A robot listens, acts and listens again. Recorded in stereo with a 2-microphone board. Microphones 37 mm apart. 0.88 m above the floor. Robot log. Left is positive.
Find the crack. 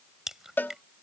cmd yaw -30
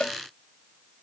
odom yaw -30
cmd idle
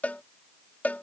end: I heard a crack, but can't make it out now. It was about 20° left or 140° right.